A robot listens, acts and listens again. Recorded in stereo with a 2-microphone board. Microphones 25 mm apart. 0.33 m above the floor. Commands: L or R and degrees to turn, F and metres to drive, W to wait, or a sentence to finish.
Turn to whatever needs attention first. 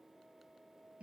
W
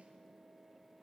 W
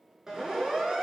R25
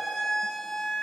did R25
Facing the siren, over 4 m away.